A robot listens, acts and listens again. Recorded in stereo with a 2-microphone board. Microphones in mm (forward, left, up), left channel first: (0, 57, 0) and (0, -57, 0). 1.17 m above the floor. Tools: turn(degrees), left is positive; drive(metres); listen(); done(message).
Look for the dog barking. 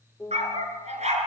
turn(degrees=-90)
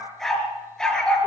turn(degrees=10)
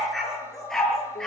done("Facing the dog barking.")